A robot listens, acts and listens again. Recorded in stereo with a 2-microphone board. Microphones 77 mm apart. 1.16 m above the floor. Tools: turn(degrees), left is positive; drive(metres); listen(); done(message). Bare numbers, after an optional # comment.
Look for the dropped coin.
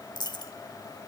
# The dropped coin: about 70° left or 110° left.
turn(70)
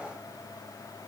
listen()
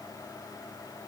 done("I heard a dropped coin, but can't make it out now. It was about straight ahead or 40° left.")